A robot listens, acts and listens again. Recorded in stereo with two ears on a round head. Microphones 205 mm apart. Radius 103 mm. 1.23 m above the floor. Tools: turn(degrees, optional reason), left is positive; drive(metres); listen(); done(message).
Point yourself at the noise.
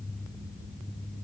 listen()
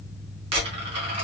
turn(degrees=-25, reason="The dropped coin: about 25° right or 155° right.")
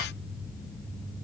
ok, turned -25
listen()
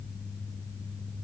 done("I heard a dropped coin, but can't make it out now. It was about straight ahead or 130° right.")